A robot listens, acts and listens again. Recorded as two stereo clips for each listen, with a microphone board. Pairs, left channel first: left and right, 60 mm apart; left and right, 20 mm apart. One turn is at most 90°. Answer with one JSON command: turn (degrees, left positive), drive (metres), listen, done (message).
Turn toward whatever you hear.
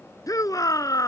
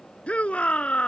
{"turn": 90}
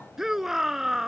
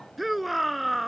{"done": "Facing the shout."}